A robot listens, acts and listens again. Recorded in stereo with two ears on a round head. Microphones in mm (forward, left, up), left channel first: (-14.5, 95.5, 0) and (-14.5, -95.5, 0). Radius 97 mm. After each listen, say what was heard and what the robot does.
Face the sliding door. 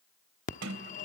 Turn 90° right.
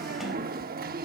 Keep listening.
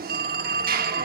Keep listening.
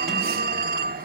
Facing where the sliding door came from. I can't hear it now.